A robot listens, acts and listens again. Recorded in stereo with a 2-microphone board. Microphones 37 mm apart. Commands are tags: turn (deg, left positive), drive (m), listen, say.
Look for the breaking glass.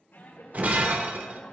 <turn deg="-45"/>
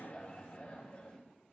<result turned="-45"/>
<listen/>
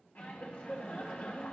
<say>I heard breaking glass, but can't make it out now. It was about straight ahead or 90° right.</say>